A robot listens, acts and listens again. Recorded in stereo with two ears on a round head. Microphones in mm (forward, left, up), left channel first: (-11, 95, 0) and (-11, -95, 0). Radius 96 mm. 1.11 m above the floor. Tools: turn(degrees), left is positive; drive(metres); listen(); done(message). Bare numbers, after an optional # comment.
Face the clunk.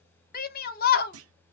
# The clunk: about 70° right or 110° right.
turn(-70)
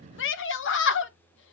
listen()
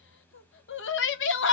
done("I heard a clunk, but can't make it out now. It was about straight ahead or 40° right.")